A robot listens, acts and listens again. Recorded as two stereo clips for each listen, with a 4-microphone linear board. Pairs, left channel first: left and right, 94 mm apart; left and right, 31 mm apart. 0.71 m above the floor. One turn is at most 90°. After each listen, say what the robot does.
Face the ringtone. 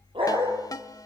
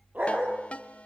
Turn 40° left.
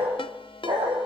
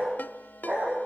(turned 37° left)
Turn 90° left.
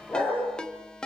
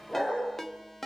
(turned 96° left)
Turn 10° left.
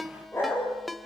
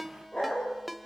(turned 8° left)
Facing the ringtone, 1 to 2 m away.